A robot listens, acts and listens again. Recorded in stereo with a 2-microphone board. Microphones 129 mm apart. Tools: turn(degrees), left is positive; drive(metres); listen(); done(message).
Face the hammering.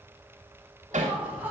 turn(degrees=-90)
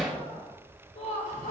done("Facing the hammering, 1 to 2 m away.")